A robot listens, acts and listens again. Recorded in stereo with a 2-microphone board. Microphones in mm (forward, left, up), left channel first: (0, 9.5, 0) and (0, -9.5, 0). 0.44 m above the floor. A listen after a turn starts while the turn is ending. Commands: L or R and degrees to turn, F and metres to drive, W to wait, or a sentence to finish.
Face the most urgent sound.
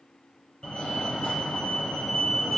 L60
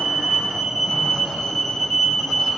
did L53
L35
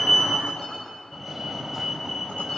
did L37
Facing the fire alarm, 2 to 4 m away.